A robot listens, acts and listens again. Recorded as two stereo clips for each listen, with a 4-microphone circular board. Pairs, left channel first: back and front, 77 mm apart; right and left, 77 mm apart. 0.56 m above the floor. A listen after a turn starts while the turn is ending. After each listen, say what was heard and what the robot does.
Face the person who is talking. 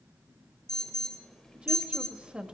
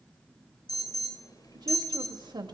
The woman speaking: 75° left. Turn 75° left.
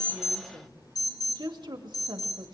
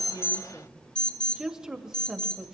Found it: a woman speaking, straight ahead.